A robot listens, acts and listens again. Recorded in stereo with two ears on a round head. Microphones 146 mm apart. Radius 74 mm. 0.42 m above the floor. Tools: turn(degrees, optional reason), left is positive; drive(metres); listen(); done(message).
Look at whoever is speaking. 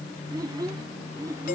turn(degrees=-20, reason="The child speaking: about 20° right or 160° right.")
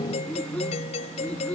done("Facing the child speaking.")